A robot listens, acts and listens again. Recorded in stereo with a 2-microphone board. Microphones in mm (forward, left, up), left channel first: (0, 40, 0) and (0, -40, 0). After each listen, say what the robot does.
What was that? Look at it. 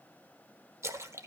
Turn 35° right.
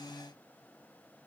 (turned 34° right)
Keep listening.
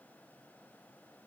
I heard a splash, but can't make it out now. It was about straight ahead or 110° right.